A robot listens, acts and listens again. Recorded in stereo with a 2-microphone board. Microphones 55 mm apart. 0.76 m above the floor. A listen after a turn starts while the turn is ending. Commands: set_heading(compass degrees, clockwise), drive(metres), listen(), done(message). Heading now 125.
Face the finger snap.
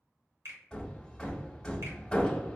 set_heading(185)
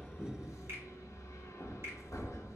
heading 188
listen()
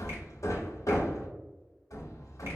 listen()
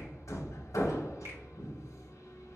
done("I heard a finger snap, but can't make it out now. It was about 5° left or 60° right.")